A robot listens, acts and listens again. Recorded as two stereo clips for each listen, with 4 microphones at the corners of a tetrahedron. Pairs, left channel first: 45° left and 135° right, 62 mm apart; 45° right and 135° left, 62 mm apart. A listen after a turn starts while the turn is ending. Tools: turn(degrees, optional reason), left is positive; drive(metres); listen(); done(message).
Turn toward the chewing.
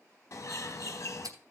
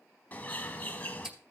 turn(degrees=-145, reason="The chewing: 145° right.")
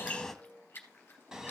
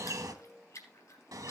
turn(degrees=-15, reason="The chewing is now 15° right.")
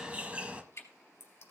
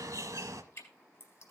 done("Found it: chewing, straight ahead, 2 to 4 m away.")